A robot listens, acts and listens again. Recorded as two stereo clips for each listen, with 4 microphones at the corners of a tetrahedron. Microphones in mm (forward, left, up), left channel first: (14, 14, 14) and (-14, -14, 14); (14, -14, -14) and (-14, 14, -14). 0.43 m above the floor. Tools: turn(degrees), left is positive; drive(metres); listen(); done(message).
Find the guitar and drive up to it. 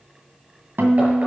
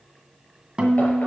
turn(degrees=-160)
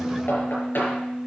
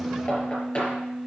turn(degrees=-60)
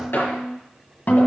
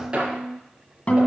drive(metres=1.0)
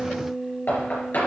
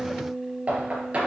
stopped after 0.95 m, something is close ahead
done("I am next to the guitar.")